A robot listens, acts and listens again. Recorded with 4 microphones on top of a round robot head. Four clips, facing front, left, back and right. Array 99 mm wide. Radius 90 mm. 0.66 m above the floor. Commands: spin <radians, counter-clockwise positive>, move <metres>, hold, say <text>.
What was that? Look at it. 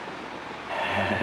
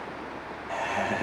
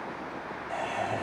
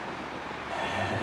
spin 0.52
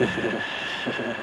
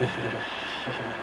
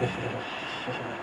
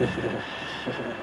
say Found it: laughter, straight ahead, 1 to 2 m away.